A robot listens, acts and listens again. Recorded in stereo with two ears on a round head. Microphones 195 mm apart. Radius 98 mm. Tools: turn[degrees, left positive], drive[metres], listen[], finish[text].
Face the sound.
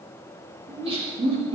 Thought: The laughter: about 30° right or 150° right.
Action: turn[-30]
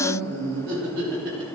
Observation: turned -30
Thought: So it is at 115° right.
Action: turn[-115]
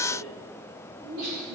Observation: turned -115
Thought: The laughter is now 45° right.
Action: turn[-45]
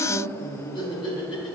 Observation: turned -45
Thought: The laughter is now 25° left.
Action: turn[25]
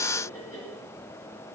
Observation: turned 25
Action: listen[]
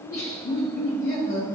Thought: The laughter is now 15° left.
Action: turn[15]
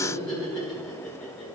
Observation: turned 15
Action: finish[Facing the laughter.]